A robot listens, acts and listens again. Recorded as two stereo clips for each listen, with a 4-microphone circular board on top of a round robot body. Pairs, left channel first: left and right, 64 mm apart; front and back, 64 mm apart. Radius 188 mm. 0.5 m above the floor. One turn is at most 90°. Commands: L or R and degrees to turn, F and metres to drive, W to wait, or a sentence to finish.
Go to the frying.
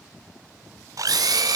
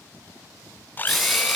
R90
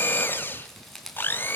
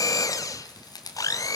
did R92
W
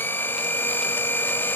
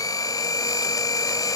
W
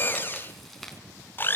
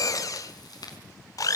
I heard frying from this way, but can't make it out now. I did not reach it.